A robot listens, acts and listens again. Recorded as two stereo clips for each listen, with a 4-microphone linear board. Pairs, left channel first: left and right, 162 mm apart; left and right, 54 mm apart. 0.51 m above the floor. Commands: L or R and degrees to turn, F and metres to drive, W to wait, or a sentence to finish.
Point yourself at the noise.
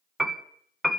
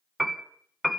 L30
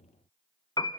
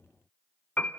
L150
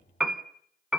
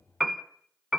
Found it: a piano, straight ahead.